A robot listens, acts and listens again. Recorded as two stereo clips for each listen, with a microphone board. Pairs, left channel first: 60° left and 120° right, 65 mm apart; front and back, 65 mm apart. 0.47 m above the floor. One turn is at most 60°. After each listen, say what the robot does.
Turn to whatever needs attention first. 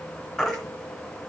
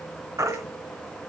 Turn 60° left.
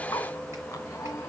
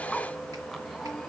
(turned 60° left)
Turn 60° left.
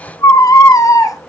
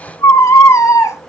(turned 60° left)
Turn 35° left.
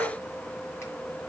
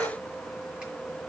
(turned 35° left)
Keep listening.
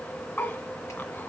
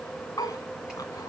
Facing the baby crying, 1 to 2 m away.